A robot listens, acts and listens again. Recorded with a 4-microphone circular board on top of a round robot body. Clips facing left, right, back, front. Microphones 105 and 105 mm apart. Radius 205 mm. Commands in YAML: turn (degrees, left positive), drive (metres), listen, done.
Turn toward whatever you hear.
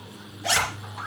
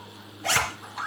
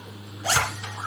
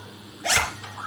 turn: -135
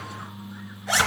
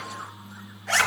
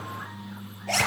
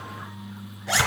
turn: 10
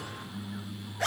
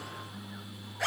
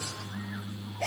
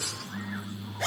done: "Facing the zipper, 2 to 4 m away."